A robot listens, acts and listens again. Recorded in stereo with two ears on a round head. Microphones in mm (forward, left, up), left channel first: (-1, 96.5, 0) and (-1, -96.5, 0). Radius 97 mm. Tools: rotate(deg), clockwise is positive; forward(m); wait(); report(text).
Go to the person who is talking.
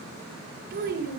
rotate(45)
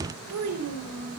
rotate(90)
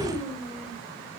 rotate(-25)
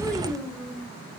forward(1.0)
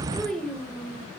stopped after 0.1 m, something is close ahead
report("Something is in my way. I am facing the child speaking but have not reached it.")